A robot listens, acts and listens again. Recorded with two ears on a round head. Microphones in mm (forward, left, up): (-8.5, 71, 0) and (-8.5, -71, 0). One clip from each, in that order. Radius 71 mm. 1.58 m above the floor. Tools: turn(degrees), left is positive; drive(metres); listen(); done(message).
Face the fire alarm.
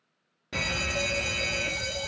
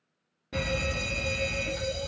turn(degrees=40)
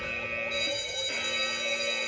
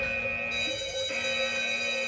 turn(degrees=10)
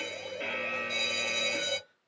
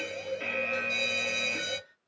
done("Found it: a fire alarm, straight ahead.")